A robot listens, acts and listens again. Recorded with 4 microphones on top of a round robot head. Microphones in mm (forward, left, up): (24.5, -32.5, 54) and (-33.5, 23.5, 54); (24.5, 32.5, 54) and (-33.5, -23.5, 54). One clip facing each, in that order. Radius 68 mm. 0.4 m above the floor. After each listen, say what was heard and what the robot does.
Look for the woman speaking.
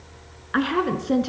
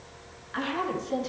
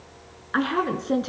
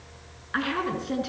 The woman speaking: 15° right. Turn 15° right.
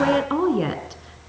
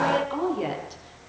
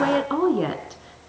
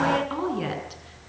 Found it: a woman speaking, straight ahead, over 4 m away.